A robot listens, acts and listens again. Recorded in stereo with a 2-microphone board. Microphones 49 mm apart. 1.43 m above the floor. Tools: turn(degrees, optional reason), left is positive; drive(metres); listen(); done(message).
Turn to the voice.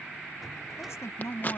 turn(degrees=70, reason="The woman speaking: about 70° left or 110° left.")
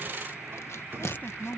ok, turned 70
turn(degrees=35, reason="So it is at 35° left.")
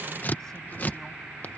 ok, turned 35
listen()
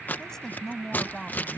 turn(degrees=10, reason="The woman speaking is now 10° left.")
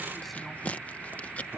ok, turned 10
listen()
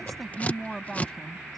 done("Found it: a woman speaking, straight ahead.")